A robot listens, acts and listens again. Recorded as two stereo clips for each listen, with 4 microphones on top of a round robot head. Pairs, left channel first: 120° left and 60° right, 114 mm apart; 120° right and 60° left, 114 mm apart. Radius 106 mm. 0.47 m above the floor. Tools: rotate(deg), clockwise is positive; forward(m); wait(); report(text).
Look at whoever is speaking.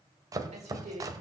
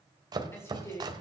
rotate(60)
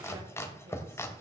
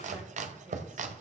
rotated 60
wait()
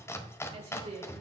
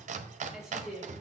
rotate(30)
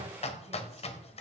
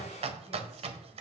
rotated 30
wait()
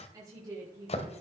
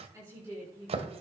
report("Found it: a woman speaking, straight ahead, over 4 m away.")